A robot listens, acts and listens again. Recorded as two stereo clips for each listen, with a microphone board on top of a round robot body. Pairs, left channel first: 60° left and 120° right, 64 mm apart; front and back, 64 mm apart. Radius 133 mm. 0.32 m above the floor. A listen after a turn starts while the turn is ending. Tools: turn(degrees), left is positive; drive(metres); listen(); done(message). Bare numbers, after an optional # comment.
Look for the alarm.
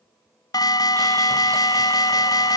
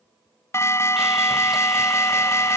# The alarm: 45° left.
turn(45)
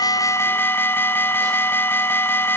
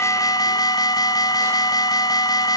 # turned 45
done("Facing the alarm.")